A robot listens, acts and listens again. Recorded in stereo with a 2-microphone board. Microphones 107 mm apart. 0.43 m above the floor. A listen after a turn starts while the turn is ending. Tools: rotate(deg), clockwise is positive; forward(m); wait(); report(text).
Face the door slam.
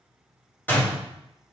rotate(-15)
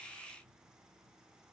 wait()
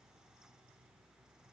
report("I heard a door slam, but can't make it out now. It was about straight ahead or 150° left.")